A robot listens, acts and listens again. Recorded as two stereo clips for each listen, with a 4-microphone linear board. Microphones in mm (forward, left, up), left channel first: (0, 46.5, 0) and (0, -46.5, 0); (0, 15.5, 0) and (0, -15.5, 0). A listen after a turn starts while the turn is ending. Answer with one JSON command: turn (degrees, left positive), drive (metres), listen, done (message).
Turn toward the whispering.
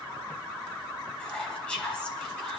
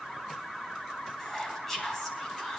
{"turn": 30}
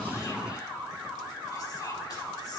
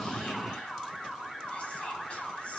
{"listen": true}
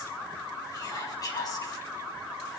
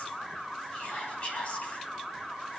{"turn": 140}
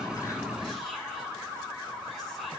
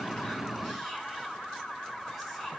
{"listen": true}
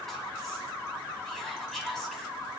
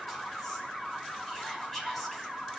{"done": "Facing the whispering."}